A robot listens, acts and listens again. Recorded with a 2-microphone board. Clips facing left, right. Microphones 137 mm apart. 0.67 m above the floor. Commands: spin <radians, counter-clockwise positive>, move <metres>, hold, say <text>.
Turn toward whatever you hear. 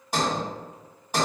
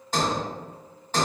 spin 0.52
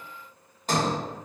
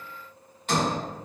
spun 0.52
spin 2.36
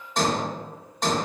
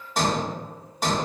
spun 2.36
say Facing the sliding door.